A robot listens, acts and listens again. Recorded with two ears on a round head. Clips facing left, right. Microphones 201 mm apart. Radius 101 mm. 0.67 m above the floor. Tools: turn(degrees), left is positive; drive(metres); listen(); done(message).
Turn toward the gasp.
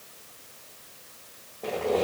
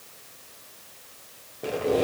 listen()
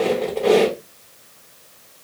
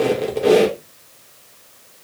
listen()
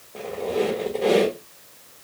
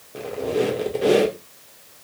done("I can't make out a gasp, only a squeak.")